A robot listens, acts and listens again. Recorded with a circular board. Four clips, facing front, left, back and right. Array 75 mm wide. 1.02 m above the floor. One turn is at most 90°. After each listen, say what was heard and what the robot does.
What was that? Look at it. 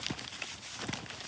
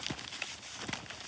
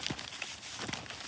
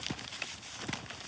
Keep listening.
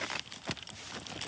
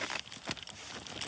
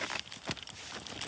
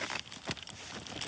Keep listening.
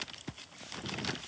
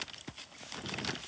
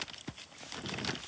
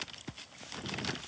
I can't make out anything to turn to.